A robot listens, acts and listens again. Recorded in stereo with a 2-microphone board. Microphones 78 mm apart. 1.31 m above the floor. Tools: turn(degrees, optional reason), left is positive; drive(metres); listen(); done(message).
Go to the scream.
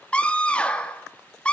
turn(degrees=30)
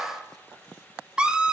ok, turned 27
turn(degrees=-15, reason="So it is at 15° right.")
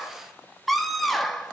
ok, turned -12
drive(metres=1.0)
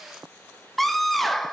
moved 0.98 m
drive(metres=1.0)
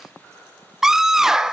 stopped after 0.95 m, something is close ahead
done("Arrived at the scream, straight ahead.")